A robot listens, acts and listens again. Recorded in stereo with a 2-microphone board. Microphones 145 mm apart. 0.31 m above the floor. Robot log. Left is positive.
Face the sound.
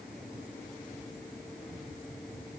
cmd idle
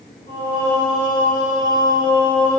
note: The singing: about 65° left or 115° left.
cmd yaw +65
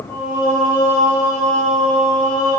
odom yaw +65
note: So it is at 45° left.
cmd yaw +45
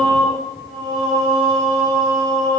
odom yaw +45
note: The singing is now 25° left.
cmd yaw +25
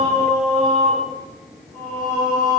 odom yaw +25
end: Facing the singing, over 4 m away.